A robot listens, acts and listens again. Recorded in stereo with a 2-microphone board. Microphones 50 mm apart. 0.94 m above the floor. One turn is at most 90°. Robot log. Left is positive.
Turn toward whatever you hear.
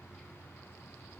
cmd idle
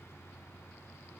cmd idle
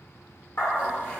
note: The dog barking: about 55° left or 125° left.
cmd yaw +55
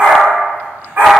note: So it is at 40° right.
cmd yaw -40
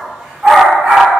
note: The dog barking is now 20° right.
cmd yaw -20
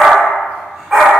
end: Facing the dog barking.